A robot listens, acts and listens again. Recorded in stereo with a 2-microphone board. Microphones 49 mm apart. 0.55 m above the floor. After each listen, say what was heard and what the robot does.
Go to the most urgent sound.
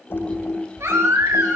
Turn 90° right.
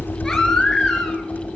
So it is at 10° left. Turn 10° left.
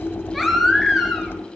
Drive 1.0 m forward.
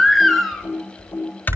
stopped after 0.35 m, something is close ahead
Something is in my way. I am facing the baby crying but have not reached it.